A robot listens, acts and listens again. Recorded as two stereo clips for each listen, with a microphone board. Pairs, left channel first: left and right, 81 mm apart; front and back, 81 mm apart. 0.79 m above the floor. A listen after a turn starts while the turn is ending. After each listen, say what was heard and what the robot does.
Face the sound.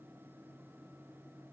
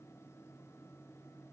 Keep listening.
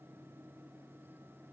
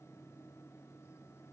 Keep listening.
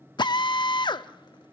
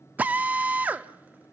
The drill: 110° left. Turn 110° left.
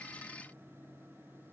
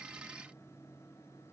Keep listening.
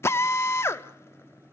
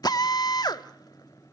The drill is now 35° left. Turn 35° left.
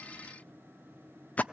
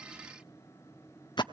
The drill is now 20° left. Turn 20° left.
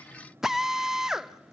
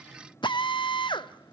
Found it: a drill, straight ahead.